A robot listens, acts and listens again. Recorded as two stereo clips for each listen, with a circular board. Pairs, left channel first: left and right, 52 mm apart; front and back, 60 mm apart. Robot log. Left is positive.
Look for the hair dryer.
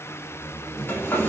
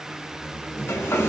note: The hair dryer: 45° left.
cmd yaw +45
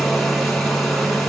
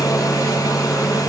end: Found it: a hair dryer, straight ahead.